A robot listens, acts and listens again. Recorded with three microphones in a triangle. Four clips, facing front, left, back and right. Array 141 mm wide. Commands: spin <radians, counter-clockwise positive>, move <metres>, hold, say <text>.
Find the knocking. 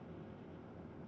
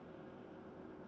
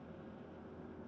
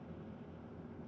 hold
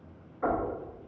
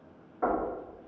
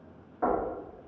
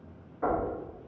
spin 2.71
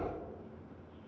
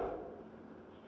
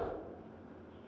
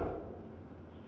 hold
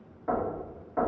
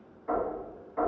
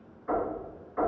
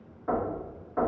spin -0.44
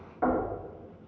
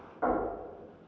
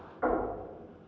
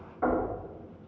say Facing the knocking, 1 to 2 m away.